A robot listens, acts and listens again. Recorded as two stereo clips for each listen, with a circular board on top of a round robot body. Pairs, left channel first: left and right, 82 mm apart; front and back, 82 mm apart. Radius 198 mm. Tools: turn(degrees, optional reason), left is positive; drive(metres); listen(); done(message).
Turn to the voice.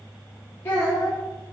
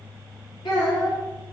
turn(degrees=25, reason="The child speaking: 25° left.")
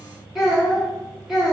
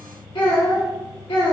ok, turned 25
done("Facing the child speaking.")